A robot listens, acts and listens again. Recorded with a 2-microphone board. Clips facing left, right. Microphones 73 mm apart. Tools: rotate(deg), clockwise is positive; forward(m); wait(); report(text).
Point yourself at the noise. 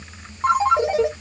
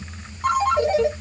rotate(-25)
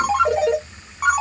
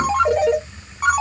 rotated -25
report("Found it: a ringtone, straight ahead.")